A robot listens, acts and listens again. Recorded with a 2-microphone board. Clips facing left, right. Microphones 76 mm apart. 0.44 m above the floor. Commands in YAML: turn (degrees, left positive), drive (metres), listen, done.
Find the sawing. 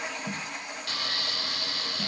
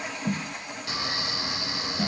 turn: -20
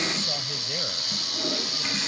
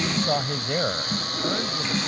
turn: -140
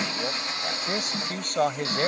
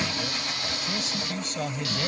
turn: 30
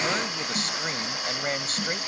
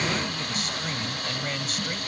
turn: 10
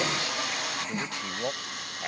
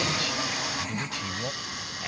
done: "Facing the sawing."